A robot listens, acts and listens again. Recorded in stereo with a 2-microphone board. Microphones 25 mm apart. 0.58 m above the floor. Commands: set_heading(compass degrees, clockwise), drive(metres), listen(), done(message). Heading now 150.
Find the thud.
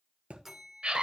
set_heading(225)
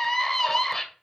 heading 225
listen()
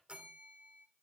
done("I heard a thud, but can't make it out now. It was about straight ahead or 30° right.")